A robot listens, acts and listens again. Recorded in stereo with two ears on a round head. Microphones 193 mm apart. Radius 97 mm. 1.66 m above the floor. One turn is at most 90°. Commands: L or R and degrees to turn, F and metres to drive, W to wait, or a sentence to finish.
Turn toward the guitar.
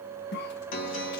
L60
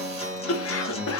L30
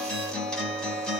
Facing the guitar, 1 to 2 m away.